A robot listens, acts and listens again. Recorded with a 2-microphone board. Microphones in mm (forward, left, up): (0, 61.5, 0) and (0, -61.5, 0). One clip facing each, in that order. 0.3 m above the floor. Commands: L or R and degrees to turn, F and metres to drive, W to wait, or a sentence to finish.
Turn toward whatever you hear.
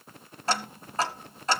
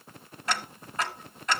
L30
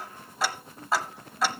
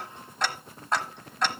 Facing the ticking.